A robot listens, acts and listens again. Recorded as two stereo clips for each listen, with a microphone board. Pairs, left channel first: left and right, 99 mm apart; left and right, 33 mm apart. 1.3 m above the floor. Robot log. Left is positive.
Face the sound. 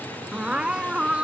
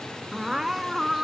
cmd yaw -30
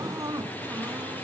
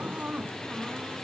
note: So it is at 140° right.
cmd yaw -140
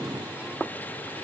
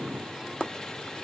cmd idle
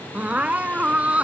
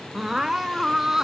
note: The crying is now 10° right.
cmd yaw -10
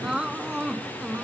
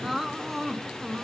end: Facing the crying.